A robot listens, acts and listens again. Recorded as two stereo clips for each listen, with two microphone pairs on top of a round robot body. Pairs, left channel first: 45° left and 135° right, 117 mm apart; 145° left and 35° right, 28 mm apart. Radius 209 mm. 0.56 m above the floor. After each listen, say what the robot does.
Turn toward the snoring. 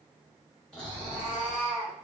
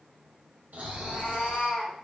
Turn 35° right.
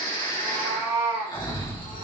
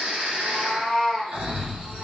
Found it: snoring, straight ahead, 1 to 2 m away.